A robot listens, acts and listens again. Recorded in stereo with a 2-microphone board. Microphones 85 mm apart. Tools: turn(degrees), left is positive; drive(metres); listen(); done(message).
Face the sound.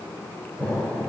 turn(degrees=-35)
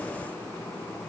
listen()
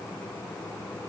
done("I heard an explosion, but can't make it out now. It was about straight ahead or 110° right.")